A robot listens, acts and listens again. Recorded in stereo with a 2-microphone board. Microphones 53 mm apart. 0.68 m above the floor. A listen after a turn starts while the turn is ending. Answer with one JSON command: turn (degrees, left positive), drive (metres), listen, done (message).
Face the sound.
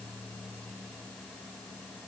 {"listen": true}
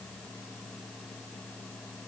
{"listen": true}
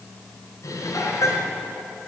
{"turn": 90}
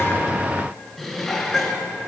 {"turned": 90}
{"done": "Found it: dishes clattering, straight ahead, over 4 m away."}